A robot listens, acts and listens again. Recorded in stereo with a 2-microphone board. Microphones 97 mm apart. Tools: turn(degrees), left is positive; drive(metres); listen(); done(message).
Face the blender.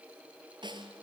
listen()
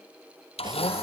turn(degrees=90)
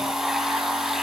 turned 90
done("Facing the blender, 2 to 4 m away.")